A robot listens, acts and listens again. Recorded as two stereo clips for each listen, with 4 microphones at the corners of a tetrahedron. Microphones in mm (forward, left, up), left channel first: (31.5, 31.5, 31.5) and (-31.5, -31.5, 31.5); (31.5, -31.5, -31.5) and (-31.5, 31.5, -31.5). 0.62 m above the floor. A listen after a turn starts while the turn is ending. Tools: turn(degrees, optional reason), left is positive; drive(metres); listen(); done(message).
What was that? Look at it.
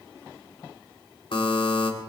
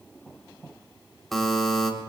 turn(degrees=40, reason="The buzzer: 40° left.")
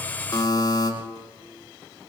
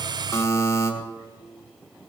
done("Facing the buzzer.")